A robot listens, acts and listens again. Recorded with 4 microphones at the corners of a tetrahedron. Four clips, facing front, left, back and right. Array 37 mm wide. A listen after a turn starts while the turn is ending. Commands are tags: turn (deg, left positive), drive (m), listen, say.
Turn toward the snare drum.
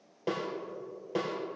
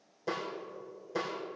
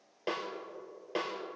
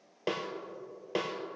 <turn deg="-110"/>
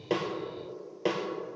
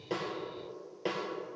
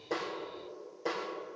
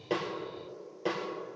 <turn deg="15"/>
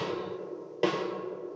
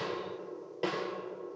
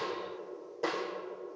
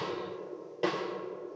<say>Facing the snare drum, 2 to 4 m away.</say>